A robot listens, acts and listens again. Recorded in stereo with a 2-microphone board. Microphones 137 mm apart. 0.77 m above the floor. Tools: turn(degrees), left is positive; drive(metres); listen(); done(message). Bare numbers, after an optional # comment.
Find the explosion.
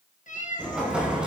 turn(-30)
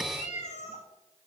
listen()
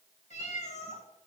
done("I heard an explosion, but can't make it out now. It was about 25° left or 145° right.")